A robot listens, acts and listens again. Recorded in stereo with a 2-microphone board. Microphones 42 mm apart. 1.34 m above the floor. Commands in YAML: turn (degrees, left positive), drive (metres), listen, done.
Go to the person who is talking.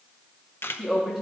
turn: -30
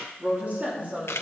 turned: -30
turn: -145
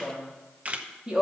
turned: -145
turn: -25
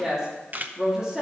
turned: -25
turn: -15
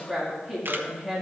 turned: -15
drive: 1.0
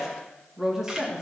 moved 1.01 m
turn: -15
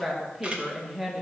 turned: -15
drive: 1.0
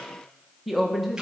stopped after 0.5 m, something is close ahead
done: "I am next to the woman speaking."